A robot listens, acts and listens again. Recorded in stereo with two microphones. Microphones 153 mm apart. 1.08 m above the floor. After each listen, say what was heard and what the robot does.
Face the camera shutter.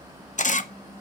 The camera shutter: about 60° left or 120° left. Turn 60° left.
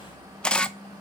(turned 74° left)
So it is at 10° left. Turn 10° left.
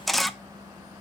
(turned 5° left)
Facing the camera shutter, under 1 m away.